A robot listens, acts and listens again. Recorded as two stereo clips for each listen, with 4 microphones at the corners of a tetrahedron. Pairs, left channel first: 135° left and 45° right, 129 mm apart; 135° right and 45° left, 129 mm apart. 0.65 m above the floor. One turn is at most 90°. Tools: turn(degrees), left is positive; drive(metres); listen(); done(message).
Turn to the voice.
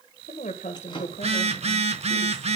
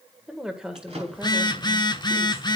turn(degrees=90)
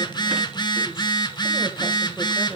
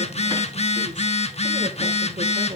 turn(degrees=40)
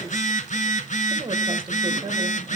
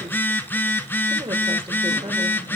done("Found it: a woman speaking, straight ahead, 1 to 2 m away.")